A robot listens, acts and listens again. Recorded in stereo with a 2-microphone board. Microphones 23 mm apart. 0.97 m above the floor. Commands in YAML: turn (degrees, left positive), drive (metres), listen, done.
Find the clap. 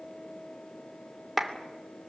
turn: 30
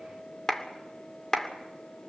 turn: 150
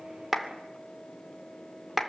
turn: -20
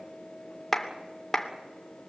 done: "Found it: a clap, straight ahead, 2 to 4 m away."